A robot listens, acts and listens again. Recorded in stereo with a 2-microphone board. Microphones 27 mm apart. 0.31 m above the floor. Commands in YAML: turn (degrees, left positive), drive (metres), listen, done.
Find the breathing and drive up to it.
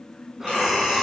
turn: -20
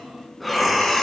drive: 1.0
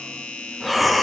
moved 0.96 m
drive: 1.0
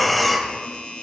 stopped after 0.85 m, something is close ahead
done: "I am next to the breathing."